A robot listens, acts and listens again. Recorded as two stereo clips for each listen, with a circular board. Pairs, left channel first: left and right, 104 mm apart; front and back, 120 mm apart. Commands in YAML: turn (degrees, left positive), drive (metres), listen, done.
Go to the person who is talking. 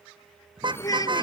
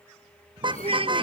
turn: 140
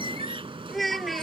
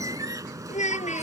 drive: 1.0
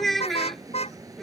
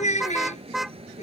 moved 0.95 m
drive: 1.0
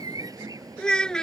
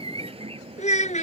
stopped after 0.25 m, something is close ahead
done: "Blocked. The child speaking is further on, straight ahead."